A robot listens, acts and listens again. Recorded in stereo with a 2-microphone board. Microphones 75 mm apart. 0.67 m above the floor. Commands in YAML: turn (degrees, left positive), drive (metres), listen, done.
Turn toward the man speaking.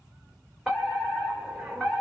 listen: true
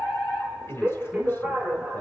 turn: 25
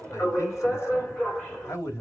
turn: 40
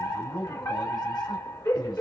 turn: 110
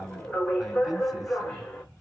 done: "Facing the man speaking, over 4 m away."